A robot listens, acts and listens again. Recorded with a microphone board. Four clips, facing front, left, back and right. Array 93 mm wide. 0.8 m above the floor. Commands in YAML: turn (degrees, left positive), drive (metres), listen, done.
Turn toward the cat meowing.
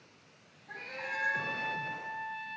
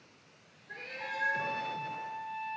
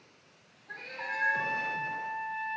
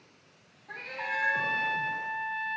turn: -75
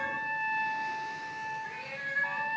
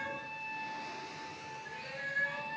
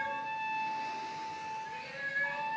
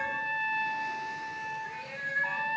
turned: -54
turn: -20
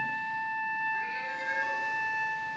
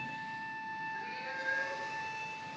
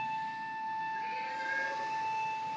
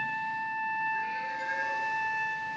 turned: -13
turn: -10
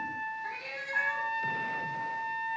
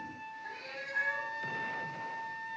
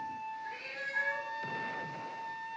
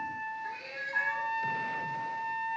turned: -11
done: "Found it: a cat meowing, straight ahead, 2 to 4 m away."